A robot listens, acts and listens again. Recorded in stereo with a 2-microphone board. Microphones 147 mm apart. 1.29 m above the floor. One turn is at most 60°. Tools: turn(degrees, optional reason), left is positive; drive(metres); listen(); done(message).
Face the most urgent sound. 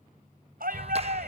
turn(degrees=-60)
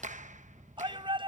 turn(degrees=-35, reason="So it is at 35° right.")
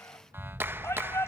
turn(degrees=15, reason="The shout is now 15° left.")
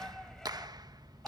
listen()
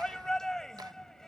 done("Found it: a shout, straight ahead.")